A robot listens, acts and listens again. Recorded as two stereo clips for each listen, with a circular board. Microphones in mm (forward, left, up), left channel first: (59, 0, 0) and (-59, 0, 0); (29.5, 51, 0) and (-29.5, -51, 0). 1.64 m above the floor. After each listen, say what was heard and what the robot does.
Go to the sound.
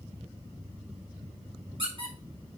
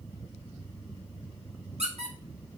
The squeak: 140° right. Turn 140° right.
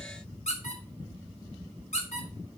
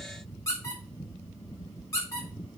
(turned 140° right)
Drive 1.0 m forward.
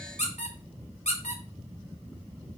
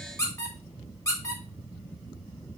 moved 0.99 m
Drive 1.0 m forward.
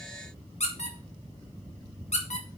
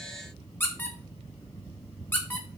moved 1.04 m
The squeak is now 10° right. Turn 10° right.
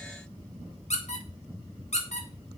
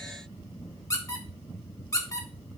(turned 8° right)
Drive 1.0 m forward.
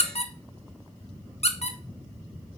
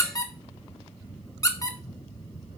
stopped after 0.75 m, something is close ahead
I am next to the squeak.